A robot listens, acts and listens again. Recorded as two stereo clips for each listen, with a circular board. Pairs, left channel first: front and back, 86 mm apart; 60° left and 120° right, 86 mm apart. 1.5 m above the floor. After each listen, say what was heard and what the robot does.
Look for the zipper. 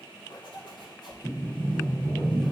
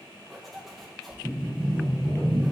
The zipper: 30° right. Turn 30° right.
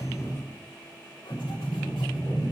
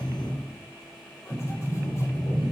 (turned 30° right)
Keep listening.
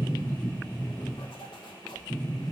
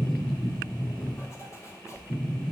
Found it: a zipper, straight ahead, 2 to 4 m away.